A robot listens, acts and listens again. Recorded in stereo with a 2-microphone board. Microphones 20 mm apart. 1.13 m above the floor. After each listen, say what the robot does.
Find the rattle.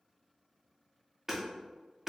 Keep listening.
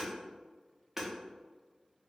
Keep listening.
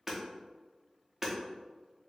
I can't make out a rattle, only hammering.